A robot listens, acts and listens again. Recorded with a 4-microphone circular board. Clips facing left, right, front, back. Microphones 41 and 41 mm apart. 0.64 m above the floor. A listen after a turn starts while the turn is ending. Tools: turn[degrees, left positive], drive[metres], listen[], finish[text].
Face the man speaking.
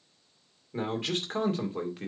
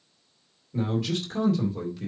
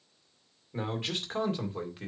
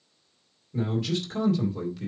Thought: The man speaking: 50° left.
Action: turn[50]
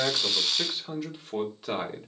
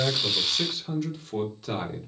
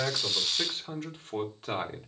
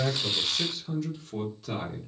Thought: The man speaking is now 25° left.
Action: turn[25]
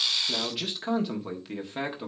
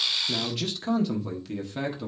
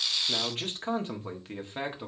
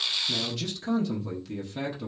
Thought: The man speaking is now 40° left.
Action: turn[40]
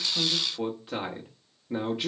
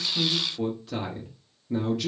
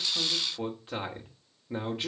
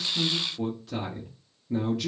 Thought: The man speaking is now 40° left.
Action: turn[40]
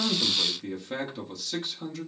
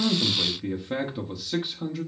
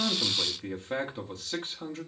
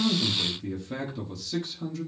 Thought: The man speaking is now 20° right.
Action: turn[-20]
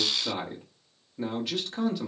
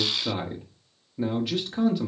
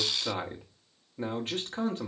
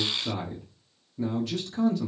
Action: finish[Found it: a man speaking, straight ahead.]